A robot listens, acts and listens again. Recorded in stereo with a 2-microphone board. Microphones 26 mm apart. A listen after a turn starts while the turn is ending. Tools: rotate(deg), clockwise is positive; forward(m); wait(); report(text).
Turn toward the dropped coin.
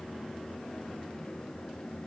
wait()
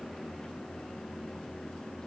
wait()
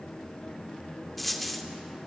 rotate(-30)
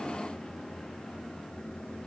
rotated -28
wait()
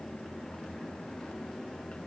report("I heard a dropped coin, but can't make it out now. It was about 25° right or 150° left.")